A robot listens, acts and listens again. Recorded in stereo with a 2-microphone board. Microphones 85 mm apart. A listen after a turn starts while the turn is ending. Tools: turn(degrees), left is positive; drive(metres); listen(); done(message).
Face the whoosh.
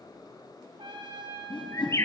turn(degrees=90)
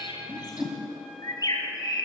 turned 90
done("Facing the whoosh, 2 to 4 m away.")